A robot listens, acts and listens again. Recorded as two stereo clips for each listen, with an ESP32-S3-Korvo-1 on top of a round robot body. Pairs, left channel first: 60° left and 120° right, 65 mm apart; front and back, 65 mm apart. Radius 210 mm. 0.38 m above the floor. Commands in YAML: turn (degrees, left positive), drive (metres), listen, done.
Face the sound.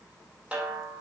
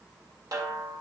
turn: 165
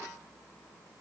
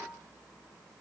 listen: true
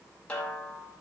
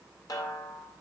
turn: -15
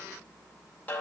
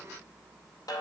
turn: -10
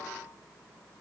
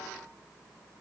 listen: true
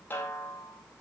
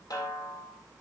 done: "Found it: a snare drum, straight ahead."